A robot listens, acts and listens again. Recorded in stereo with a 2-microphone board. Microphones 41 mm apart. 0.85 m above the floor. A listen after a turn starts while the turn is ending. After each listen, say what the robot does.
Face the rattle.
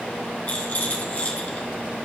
Turn 40° left.
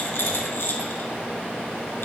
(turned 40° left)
Turn 95° left.
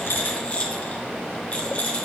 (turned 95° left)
Turn 35° left.
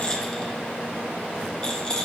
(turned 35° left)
Turn 20° left.
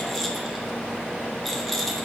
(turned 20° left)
Facing the rattle, 1 to 2 m away.